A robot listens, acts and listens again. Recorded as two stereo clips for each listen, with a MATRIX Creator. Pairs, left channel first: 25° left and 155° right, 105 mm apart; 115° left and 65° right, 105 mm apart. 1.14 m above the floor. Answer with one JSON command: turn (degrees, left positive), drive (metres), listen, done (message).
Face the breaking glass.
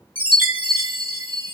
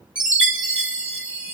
{"listen": true}
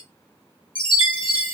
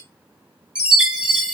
{"listen": true}
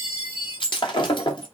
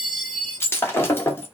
{"turn": 50}
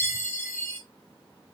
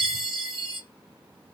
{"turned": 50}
{"done": "Facing where the breaking glass came from. I can't hear it now."}